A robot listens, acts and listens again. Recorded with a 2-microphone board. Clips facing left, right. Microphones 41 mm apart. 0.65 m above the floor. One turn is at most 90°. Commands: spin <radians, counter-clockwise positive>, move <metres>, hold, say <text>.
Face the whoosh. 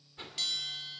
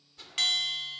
spin 0.44
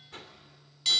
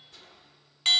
spin 1.57
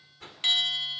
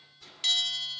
spin 0.79
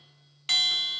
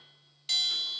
hold
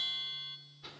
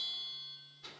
say Facing the whoosh, 2 to 4 m away.